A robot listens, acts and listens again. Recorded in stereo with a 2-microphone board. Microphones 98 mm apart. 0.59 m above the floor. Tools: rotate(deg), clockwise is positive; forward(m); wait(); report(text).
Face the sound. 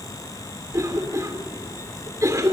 rotate(35)
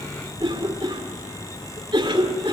rotate(105)
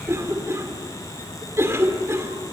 rotate(35)
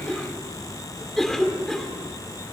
report("Facing the cough, 2 to 4 m away.")